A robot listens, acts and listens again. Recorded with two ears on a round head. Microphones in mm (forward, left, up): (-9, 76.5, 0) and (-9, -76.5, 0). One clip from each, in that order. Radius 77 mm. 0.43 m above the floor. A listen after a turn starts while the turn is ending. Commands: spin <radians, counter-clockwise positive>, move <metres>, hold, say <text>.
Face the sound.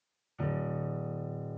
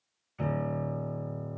spin -0.52
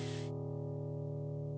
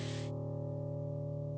spin -2.53
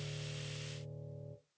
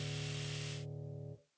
say Facing the piano.